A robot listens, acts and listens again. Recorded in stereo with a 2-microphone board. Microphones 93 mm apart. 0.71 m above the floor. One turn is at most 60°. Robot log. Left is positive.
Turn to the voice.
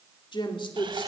note: The woman speaking: about 60° left or 120° left.
cmd yaw +60
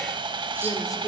note: So it is at 45° left.
cmd yaw +45
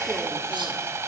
cmd idle
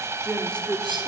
note: The woman speaking is now 10° left.
cmd yaw +10
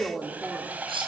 end: Facing the woman speaking.